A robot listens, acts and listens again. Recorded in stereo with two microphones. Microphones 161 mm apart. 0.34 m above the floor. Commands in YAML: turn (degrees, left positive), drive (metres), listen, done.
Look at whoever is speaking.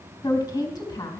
turn: 25
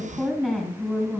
done: "Facing the woman speaking."